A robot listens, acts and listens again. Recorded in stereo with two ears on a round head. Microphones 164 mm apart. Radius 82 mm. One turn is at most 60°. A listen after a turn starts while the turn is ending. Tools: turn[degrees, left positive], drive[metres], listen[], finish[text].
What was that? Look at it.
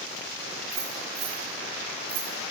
Action: turn[-60]
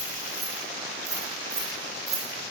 Thought: So it is at 20° right.
Action: turn[-20]
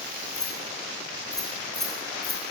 Action: finish[Facing the keys jangling, 2 to 4 m away.]